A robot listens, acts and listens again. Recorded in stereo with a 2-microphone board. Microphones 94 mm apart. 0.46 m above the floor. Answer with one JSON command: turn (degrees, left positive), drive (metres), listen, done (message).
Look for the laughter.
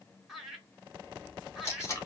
{"turn": -30}
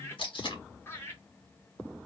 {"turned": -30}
{"turn": 25}
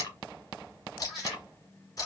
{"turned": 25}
{"done": "Facing the laughter, 1 to 2 m away."}